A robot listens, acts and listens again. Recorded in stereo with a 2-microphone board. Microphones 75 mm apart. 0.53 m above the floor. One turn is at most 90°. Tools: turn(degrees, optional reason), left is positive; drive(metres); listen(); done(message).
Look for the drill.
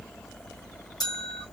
listen()
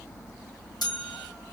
listen()
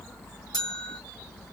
done("I can't make out a drill, only a bell.")